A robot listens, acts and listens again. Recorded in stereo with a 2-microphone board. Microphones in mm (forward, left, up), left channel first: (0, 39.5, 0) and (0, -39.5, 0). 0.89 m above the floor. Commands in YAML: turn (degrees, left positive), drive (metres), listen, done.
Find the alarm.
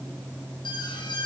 turn: 90
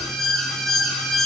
done: "Found it: an alarm, straight ahead, over 4 m away."